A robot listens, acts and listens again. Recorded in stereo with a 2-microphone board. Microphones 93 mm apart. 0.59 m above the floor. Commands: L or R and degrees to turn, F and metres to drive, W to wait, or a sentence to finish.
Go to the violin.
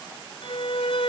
L75
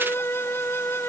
L25
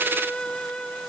L10
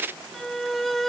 F1.0
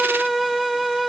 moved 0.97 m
F1.0
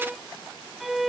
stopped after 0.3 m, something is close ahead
I am next to the violin.